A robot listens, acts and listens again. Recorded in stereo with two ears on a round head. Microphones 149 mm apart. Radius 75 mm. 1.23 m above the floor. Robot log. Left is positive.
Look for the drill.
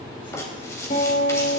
cmd idle
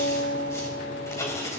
cmd idle
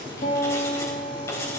end: I can't make out a drill, only writing and a guitar.